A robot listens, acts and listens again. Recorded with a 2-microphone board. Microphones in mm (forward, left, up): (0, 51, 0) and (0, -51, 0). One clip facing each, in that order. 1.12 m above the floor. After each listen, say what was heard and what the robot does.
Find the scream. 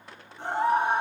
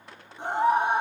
The scream: about 20° right or 160° right. Turn 20° right.
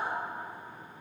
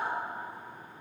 Facing the scream.